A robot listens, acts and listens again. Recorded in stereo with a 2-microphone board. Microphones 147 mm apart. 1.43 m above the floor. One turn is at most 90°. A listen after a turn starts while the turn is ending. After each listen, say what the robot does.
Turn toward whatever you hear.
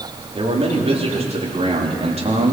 Turn 50° right.
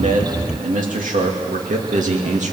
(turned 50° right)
Turn 60° right.
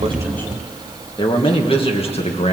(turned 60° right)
Turn 50° left.
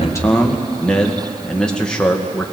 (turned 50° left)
Facing the man speaking, 1 to 2 m away.